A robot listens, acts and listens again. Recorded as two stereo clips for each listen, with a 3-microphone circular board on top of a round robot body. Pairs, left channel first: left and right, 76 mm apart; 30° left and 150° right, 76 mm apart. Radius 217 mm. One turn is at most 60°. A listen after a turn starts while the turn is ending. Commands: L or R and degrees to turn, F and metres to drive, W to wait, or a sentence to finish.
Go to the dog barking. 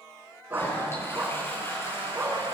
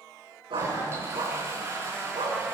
R60
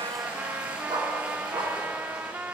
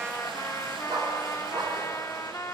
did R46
R60
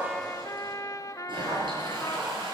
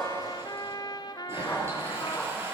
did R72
R40
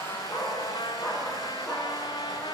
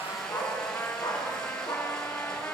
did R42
F1.0
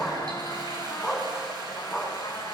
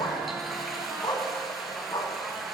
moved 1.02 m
F1.0
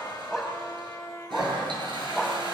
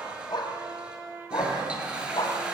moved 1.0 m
F1.0
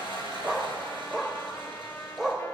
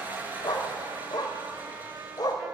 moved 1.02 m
F1.0
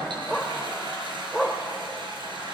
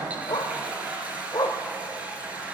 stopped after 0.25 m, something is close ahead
I am next to the dog barking.